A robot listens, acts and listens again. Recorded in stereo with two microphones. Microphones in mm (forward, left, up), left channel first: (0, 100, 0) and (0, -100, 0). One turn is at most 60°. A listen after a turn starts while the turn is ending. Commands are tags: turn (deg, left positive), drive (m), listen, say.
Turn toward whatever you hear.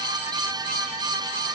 <listen/>
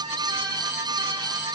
<listen/>
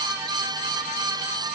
<say>I can't make out anything to turn to.</say>